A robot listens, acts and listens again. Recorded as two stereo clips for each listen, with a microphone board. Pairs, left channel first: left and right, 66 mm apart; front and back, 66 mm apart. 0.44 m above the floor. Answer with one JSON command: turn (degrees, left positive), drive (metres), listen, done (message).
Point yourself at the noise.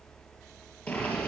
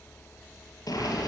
{"turn": 20}
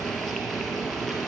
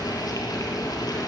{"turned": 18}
{"done": "Found it: boiling, straight ahead."}